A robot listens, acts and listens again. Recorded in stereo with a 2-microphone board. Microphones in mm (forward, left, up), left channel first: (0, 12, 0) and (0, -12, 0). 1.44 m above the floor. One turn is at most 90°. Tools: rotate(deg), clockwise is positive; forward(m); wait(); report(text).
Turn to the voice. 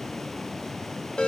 wait()
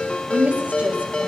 rotate(90)
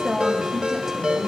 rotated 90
report("Facing the woman speaking, over 4 m away.")